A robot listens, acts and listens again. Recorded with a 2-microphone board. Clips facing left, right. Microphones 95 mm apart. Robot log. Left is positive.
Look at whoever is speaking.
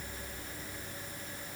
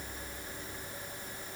cmd idle
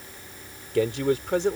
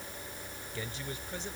note: The man speaking: about 75° left or 105° left.
cmd yaw +75
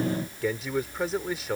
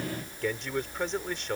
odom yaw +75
end: Facing the man speaking.